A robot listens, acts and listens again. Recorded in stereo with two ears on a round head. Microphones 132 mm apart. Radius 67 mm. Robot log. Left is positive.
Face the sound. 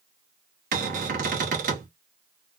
note: The cupboard door: about 60° right or 120° right.
cmd yaw -60
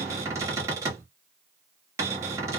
note: So it is at 25° right.
cmd yaw -25
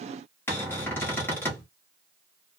note: The cupboard door is now 20° left.
cmd yaw +20
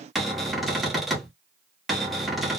end: Found it: a cupboard door, straight ahead, under 1 m away.